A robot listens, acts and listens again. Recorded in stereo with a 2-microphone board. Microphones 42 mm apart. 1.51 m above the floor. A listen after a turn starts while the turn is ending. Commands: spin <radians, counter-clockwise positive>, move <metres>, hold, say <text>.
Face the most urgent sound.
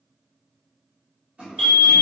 spin 0.52
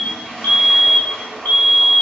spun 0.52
spin 2.36
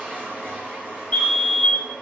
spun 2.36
spin 0.61
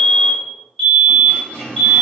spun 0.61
say Facing the fire alarm.